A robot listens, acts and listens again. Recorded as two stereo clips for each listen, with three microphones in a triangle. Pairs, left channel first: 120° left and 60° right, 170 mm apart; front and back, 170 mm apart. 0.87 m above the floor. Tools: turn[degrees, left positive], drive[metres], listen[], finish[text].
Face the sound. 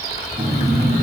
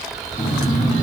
Thought: The phone buzzing: 55° right.
Action: turn[-55]
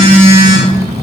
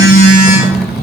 Thought: The phone buzzing is now 10° right.
Action: turn[-10]
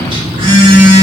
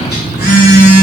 Action: finish[Found it: a phone buzzing, straight ahead.]